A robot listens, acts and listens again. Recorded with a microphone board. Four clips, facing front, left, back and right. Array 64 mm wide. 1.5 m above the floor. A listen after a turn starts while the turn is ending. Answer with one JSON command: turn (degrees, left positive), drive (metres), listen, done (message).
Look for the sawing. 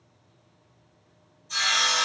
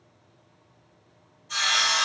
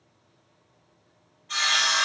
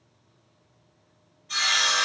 {"turn": -165}
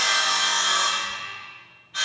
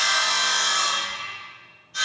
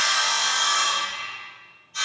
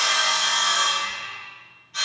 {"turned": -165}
{"turn": -15}
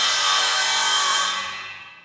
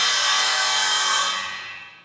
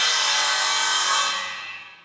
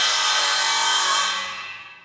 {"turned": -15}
{"done": "Facing the sawing."}